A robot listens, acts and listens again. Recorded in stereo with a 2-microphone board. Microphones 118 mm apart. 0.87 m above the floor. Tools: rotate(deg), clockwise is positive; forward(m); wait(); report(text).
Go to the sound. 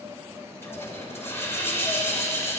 rotate(-20)
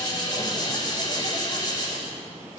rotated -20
rotate(-140)
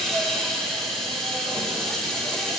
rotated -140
forward(1.0)
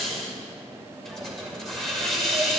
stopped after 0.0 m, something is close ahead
report("Something is in my way. I am facing the hiss but have not reached it.")